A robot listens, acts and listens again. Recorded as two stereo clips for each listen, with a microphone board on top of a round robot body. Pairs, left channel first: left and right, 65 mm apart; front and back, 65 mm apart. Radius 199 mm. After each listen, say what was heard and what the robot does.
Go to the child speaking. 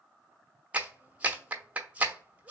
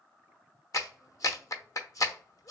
Keep listening.
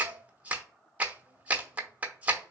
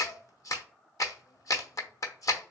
Keep listening.
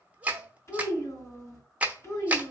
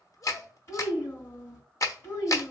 The child speaking: 50° left. Turn 50° left.
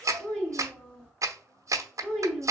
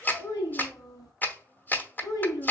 The child speaking is now 15° left. Turn 15° left.
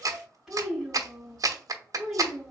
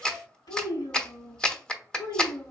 Drive 1.0 m forward.
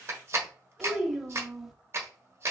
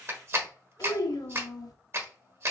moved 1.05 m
Drive 1.0 m forward.
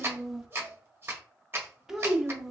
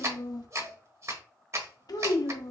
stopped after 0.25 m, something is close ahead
Arrived at the child speaking, straight ahead.